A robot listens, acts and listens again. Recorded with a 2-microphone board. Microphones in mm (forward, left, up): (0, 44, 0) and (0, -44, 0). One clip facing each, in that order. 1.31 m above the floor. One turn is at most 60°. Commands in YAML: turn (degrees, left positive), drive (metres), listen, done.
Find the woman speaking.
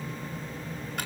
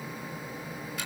listen: true
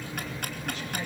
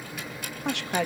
turn: -60
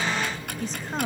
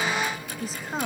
done: "Found it: a woman speaking, straight ahead, 2 to 4 m away."